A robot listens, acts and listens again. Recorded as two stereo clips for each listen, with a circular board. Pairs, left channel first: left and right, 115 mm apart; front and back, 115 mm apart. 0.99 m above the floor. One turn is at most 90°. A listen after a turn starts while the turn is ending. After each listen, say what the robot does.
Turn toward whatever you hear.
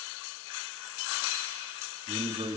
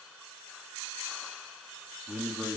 Turn 90° right.
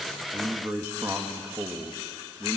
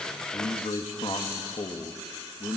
Turn 35° right.
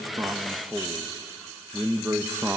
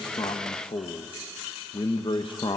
Turn 25° right.
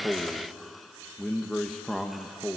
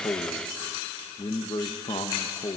Facing the man speaking.